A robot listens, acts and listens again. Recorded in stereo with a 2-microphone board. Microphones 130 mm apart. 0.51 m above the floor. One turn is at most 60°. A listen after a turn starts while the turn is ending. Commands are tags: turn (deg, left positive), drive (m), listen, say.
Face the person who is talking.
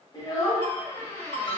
<turn deg="35"/>
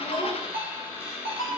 <listen/>
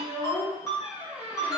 <turn deg="60"/>
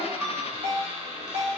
<turn deg="50"/>
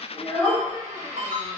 <turn deg="25"/>
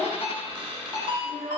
<say>Facing the child speaking, 1 to 2 m away.</say>